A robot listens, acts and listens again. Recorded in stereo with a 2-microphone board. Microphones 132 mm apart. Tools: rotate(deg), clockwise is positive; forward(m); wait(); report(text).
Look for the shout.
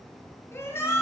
rotate(-20)
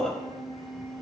report("Found it: a shout, straight ahead, 1 to 2 m away.")